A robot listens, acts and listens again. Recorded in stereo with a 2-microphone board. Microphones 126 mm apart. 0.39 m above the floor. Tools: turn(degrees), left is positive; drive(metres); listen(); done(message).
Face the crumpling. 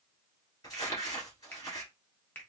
turn(degrees=30)
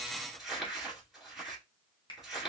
done("Facing the crumpling.")